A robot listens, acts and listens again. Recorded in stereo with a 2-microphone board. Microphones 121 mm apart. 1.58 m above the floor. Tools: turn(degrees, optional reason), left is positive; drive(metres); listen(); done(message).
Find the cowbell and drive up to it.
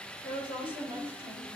listen()
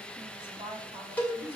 turn(degrees=30)
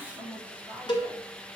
turn(degrees=135, reason="So it is at 135° left.")
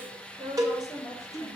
turn(degrees=-35, reason="The cowbell is now 35° right.")
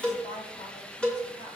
turn(degrees=10, reason="The cowbell is now 10° left.")
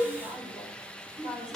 drive(metres=1.0)
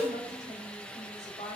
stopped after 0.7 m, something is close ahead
done("I am next to the cowbell.")